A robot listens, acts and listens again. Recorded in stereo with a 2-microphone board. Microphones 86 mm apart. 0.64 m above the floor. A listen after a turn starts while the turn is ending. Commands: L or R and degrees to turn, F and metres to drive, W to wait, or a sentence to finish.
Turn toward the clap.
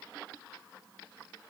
W
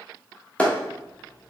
L15
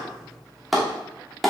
Found it: a clap, straight ahead, under 1 m away.